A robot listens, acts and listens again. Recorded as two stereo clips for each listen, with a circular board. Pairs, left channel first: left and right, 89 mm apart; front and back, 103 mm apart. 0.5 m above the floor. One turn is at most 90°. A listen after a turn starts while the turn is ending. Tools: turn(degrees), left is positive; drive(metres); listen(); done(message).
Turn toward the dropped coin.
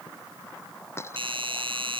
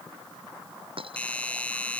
turn(degrees=90)
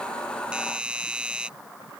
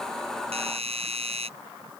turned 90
turn(degrees=60)
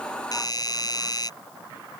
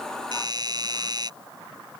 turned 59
done("Facing where the dropped coin came from. I can't hear it now.")